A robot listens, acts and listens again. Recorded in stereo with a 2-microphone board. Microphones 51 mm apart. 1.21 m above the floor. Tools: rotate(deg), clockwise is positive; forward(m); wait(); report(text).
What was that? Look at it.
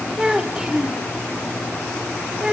rotate(30)
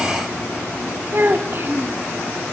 rotate(135)
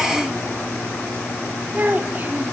rotate(40)
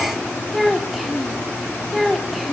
report("Facing the child speaking.")